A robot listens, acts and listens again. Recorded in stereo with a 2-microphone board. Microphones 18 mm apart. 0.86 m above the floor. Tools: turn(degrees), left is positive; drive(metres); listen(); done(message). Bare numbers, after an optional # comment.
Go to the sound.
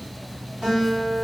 # The guitar: about 75° right or 105° right.
turn(-75)
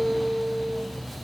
# So it is at 15° right.
turn(-15)
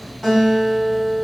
drive(1.0)
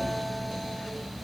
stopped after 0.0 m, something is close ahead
listen()
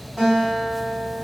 # The guitar is now 10° left.
turn(10)
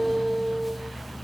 done("Something is in my way. I am facing the guitar but have not reached it.")